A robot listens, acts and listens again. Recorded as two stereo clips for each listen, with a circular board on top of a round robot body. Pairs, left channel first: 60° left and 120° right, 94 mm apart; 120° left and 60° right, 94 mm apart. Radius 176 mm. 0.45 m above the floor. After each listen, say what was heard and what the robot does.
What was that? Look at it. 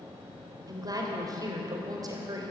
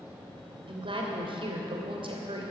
The woman speaking: 75° right. Turn 75° right.
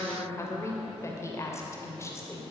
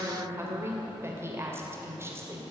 Found it: a woman speaking, straight ahead.